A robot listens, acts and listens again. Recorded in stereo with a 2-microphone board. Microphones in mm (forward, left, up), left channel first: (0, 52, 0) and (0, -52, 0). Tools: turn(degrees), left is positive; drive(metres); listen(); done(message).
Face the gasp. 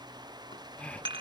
turn(degrees=30)
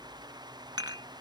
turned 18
listen()
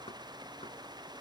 done("I heard a gasp, but can't make it out now. It was about 5° right or 150° left.")